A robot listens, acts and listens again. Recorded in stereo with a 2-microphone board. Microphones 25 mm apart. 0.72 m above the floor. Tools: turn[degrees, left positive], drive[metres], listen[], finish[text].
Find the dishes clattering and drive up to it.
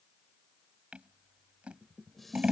Action: turn[30]
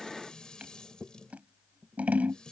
Thought: So it is at 145° left.
Action: turn[145]
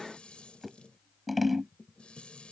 Thought: The dishes clattering is now 55° left.
Action: turn[55]
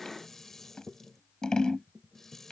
Thought: The dishes clattering is now 20° left.
Action: turn[20]
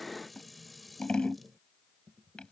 Action: drive[1.0]
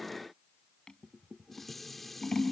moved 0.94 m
Thought: The dishes clattering is now 10° left.
Action: turn[10]
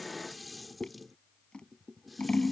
Action: drive[1.0]
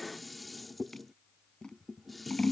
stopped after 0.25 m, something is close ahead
Action: finish[I am next to the dishes clattering.]